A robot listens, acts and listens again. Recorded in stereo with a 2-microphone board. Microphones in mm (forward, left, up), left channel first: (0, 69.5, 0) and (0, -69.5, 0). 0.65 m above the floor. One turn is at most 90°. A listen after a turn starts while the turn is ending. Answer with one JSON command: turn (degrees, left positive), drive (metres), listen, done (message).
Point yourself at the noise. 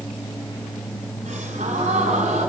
{"turn": -60}
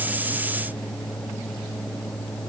{"listen": true}
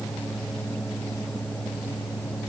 {"done": "I heard a gasp, but can't make it out now. It was about straight ahead or 60° right."}